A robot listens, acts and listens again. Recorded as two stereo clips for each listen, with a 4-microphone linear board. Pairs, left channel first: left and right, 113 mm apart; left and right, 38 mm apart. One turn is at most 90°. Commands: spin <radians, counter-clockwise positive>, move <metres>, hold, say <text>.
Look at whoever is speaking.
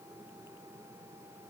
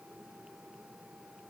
hold
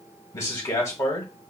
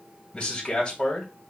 spin 0.44
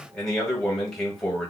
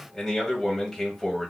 say Found it: a man speaking, straight ahead, 1 to 2 m away.